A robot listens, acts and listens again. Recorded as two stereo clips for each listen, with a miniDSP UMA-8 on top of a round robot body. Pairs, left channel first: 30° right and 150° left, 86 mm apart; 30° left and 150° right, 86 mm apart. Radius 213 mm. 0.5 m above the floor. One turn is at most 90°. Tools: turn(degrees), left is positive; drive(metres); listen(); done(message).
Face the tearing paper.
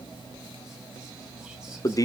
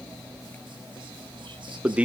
listen()
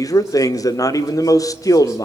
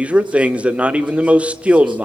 listen()
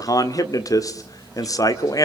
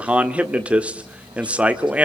done("I can't make out tearing paper to turn to.")